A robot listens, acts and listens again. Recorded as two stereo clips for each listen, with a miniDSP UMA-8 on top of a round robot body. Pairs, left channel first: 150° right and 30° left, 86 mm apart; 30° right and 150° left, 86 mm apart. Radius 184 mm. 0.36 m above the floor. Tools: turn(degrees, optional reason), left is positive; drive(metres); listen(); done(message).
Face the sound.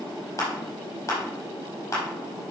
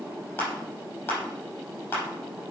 turn(degrees=-90, reason="The crushing: 90° right.")
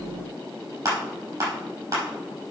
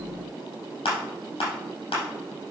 turn(degrees=-20, reason="The crushing is now 20° right.")
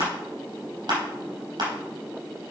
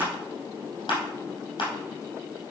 done("Found it: crushing, straight ahead, over 4 m away.")